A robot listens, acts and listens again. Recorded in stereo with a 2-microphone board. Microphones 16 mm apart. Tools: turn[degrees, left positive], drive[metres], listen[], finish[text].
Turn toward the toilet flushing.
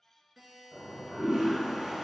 Thought: The toilet flushing: about 55° right or 125° right.
Action: turn[-55]
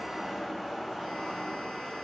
Thought: So it is at 60° right.
Action: turn[-60]
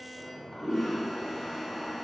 Thought: The toilet flushing is now 25° left.
Action: turn[25]
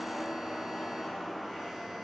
Action: finish[Facing the toilet flushing.]